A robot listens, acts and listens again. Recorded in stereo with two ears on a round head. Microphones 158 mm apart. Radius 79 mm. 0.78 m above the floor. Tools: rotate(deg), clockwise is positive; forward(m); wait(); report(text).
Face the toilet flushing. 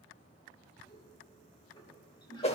rotate(-25)
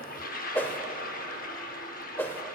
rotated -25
rotate(-125)
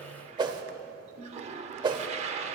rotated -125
rotate(40)
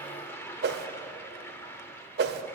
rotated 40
rotate(-15)
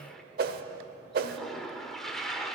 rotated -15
report("Facing the toilet flushing, under 1 m away.")